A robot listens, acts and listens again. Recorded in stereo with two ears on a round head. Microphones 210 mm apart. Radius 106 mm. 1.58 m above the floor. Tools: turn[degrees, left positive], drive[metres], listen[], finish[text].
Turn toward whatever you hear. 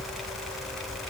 Action: listen[]
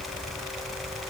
Action: listen[]
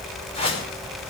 Thought: The whoosh: about 25° left or 155° left.
Action: turn[25]
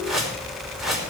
Action: finish[Found it: a whoosh, straight ahead.]